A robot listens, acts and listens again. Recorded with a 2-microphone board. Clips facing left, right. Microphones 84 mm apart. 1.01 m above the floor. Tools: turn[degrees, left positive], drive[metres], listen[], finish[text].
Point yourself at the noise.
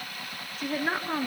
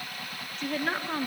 Action: turn[30]
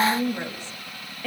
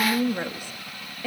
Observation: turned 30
Action: finish[Facing the woman speaking, 1 to 2 m away.]